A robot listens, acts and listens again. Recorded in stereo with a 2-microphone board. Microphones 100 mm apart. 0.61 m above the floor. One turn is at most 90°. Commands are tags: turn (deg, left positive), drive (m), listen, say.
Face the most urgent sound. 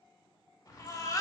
<turn deg="35"/>
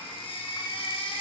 <turn deg="90"/>
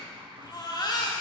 <turn deg="50"/>
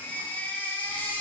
<turn deg="20"/>
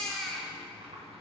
<say>Found it: a baby crying, straight ahead.</say>